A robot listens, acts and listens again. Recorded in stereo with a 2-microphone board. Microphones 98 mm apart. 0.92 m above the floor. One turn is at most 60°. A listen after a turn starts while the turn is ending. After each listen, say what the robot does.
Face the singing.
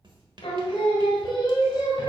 Turn 45° left.
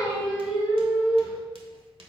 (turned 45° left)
Turn 15° right.
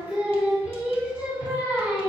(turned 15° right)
Turn 25° right.
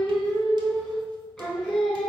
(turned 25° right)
Facing the singing.